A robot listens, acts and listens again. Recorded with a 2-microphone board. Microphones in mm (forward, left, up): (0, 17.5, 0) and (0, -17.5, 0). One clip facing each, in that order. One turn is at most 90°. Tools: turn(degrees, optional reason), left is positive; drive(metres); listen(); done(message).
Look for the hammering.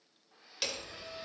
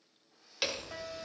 turn(degrees=-15, reason="The hammering: about 15° right or 165° right.")
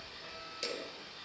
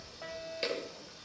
turn(degrees=-90, reason="So it is at 150° right.")
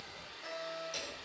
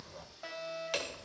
turn(degrees=-80, reason="The hammering is now 80° right.")
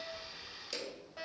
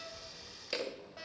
turn(degrees=-40, reason="The hammering is now 40° right.")
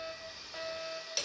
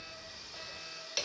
turn(degrees=-20, reason="The hammering is now 20° right.")
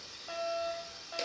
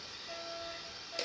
done("Found it: hammering, straight ahead.")